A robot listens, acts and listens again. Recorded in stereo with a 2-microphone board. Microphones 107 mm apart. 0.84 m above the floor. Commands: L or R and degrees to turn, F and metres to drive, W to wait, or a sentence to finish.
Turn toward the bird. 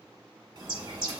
R40
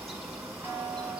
Found it: a bird, straight ahead.